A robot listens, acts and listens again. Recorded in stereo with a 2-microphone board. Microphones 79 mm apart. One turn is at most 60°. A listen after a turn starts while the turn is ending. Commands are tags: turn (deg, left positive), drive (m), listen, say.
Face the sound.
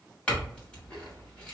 <turn deg="15"/>
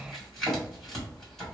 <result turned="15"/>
<say>Facing the clink, 1 to 2 m away.</say>